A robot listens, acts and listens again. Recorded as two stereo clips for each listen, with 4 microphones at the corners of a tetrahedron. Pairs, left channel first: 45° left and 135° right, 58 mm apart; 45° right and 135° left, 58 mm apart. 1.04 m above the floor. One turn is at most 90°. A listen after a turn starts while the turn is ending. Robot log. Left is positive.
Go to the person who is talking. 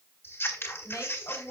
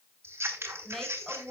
note: The woman speaking: 40° left.
cmd yaw +40
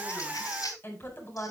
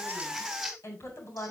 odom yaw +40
note: The woman speaking is now 10° right.
cmd yaw -10
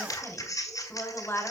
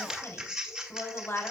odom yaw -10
cmd fwd 1.0
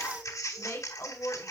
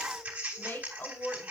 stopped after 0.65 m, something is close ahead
end: Blocked. The woman speaking is further on, straight ahead.